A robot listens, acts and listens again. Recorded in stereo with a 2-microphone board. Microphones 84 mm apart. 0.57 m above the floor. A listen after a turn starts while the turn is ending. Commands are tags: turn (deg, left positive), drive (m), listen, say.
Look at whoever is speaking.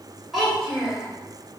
<turn deg="30"/>
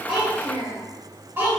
<turn deg="-30"/>
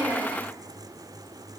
<listen/>
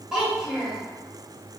<say>Found it: a child speaking, straight ahead.</say>